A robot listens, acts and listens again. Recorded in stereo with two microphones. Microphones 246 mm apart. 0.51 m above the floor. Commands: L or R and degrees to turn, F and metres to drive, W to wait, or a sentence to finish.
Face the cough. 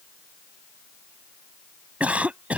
R30
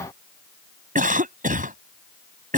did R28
R145
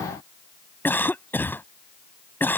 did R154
L10
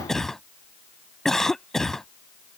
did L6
Found it: a cough, straight ahead.